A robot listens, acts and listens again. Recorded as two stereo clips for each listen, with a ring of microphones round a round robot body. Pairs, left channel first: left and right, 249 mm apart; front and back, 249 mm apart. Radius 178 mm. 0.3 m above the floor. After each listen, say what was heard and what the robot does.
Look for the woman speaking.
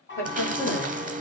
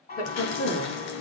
The woman speaking: 15° left. Turn 15° left.
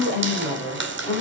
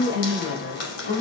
The woman speaking is now 15° left. Turn 15° left.
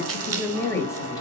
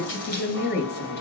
The woman speaking is now 15° left. Turn 15° left.
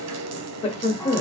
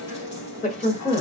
The woman speaking is now 55° left. Turn 55° left.
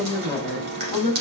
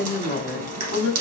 The woman speaking is now 25° left. Turn 25° left.
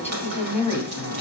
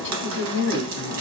The woman speaking is now 10° left. Turn 10° left.
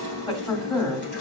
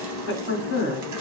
Facing the woman speaking.